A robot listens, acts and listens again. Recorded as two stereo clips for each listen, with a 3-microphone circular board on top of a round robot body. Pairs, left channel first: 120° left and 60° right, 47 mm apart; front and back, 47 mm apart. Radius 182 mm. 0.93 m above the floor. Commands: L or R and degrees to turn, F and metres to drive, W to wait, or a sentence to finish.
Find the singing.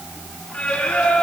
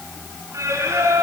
R170
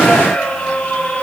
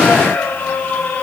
L60
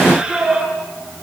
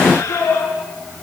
L15
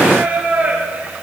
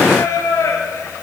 Found it: singing, straight ahead, over 4 m away.